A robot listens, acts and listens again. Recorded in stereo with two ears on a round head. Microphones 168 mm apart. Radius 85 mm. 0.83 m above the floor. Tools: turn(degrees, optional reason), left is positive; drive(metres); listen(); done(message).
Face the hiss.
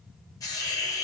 turn(degrees=20, reason="The hiss: about 20° left or 160° left.")
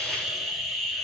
done("Found it: a hiss, straight ahead.")